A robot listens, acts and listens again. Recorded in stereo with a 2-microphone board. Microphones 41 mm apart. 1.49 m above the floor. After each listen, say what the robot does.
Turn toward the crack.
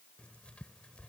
Keep listening.
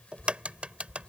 Turn 30° right.
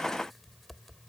Keep listening.
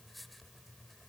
I heard a crack, but can't make it out now. It was about straight ahead or 120° right.